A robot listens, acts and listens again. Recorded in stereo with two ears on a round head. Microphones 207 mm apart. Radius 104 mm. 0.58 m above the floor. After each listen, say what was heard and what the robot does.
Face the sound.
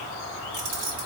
The keys jangling: about 70° right or 110° right. Turn 70° right.
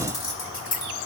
So it is at 25° left. Turn 25° left.
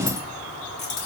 The keys jangling is now 30° left. Turn 30° left.
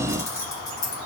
The keys jangling is now 20° left. Turn 20° left.
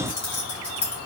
Facing the keys jangling.